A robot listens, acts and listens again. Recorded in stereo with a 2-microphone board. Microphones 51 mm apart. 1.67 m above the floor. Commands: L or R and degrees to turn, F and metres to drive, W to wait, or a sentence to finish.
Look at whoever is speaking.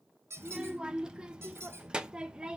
R15
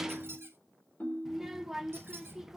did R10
R30
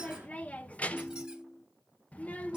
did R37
L30
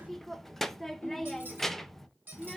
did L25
Facing the child speaking, under 1 m away.